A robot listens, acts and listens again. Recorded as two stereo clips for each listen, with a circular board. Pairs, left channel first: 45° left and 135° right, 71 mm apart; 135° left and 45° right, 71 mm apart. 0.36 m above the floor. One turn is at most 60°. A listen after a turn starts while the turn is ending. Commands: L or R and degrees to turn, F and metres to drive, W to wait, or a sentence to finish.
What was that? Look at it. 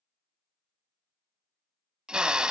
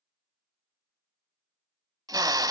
R60
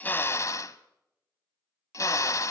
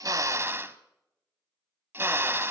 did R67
L10
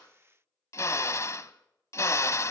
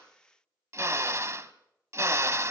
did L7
Found it: a drill, straight ahead, 1 to 2 m away.